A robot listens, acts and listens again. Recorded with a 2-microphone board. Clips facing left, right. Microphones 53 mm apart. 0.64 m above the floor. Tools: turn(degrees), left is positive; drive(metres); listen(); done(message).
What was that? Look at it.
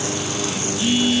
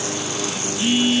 turn(degrees=-25)
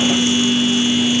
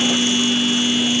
done("Found it: a phone buzzing, straight ahead.")